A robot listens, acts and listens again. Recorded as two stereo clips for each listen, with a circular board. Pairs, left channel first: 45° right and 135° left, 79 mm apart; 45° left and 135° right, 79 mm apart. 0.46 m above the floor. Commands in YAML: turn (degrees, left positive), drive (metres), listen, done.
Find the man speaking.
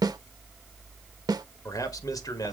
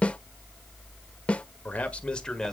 turn: -35
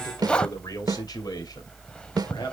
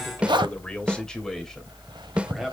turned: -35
turn: -45
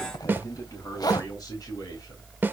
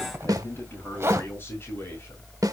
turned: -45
turn: -15
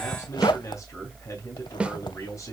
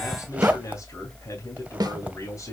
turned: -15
done: "Found it: a man speaking, straight ahead, 2 to 4 m away."